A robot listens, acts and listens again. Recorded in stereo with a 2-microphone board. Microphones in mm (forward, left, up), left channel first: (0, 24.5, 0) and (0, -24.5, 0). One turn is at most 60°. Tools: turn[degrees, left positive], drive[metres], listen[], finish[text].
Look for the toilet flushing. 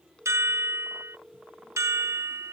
Action: listen[]
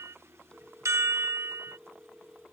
Action: listen[]
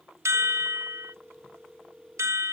Action: finish[I can't make out a toilet flushing to turn to.]